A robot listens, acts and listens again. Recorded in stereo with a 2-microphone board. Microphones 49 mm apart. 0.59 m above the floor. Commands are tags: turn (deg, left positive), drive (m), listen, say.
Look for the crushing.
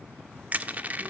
<turn deg="-35"/>
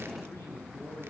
<listen/>
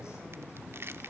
<turn deg="-110"/>
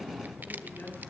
<listen/>
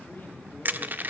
<turn deg="-45"/>
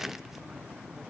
<listen/>
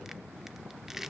<turn deg="-10"/>
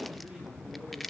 <say>Found it: crushing, straight ahead, under 1 m away.</say>